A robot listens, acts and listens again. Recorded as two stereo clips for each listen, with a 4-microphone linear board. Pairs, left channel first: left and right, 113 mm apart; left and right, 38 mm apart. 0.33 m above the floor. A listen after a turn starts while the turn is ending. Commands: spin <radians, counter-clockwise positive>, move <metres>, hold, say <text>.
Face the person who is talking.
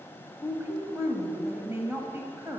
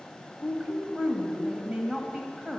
spin -0.44
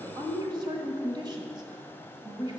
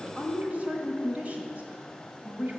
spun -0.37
spin -2.27
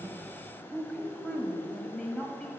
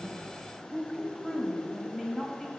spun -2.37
spin 0.17
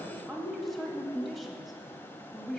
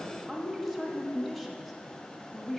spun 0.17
say Found it: a woman speaking, straight ahead.